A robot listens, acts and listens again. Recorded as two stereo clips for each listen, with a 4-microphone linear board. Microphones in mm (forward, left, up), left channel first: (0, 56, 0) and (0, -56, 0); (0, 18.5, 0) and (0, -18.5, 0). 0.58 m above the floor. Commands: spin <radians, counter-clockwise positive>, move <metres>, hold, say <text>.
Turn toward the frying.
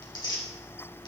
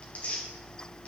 hold
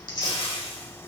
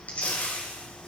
spin 0.96
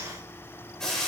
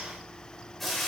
say Facing the frying, 2 to 4 m away.